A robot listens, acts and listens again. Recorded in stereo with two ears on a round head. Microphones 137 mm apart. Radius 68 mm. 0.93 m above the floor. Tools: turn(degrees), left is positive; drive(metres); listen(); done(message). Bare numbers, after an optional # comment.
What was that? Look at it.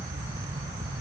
listen()
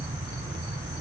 listen()
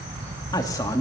# The man speaking: about 20° left or 160° left.
turn(20)
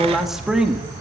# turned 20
done("Found it: a man speaking, straight ahead, 1 to 2 m away.")